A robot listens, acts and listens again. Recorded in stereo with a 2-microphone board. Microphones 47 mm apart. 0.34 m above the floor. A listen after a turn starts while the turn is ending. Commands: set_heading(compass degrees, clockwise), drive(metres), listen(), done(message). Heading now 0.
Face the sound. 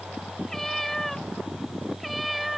set_heading(330)
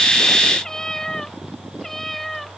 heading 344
set_heading(314)
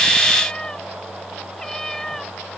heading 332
set_heading(302)
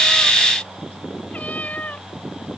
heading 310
set_heading(160)
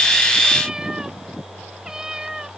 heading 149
set_heading(159)
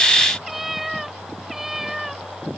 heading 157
done("Found it: a cat meowing, straight ahead.")